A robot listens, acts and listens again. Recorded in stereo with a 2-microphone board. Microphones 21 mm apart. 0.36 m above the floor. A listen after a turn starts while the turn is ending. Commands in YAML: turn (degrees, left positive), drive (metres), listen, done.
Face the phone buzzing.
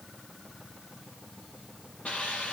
listen: true
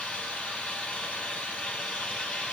listen: true
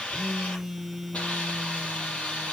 turn: 30
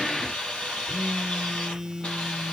turn: -25
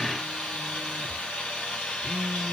turn: -15
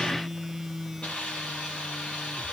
done: "Facing the phone buzzing, 1 to 2 m away."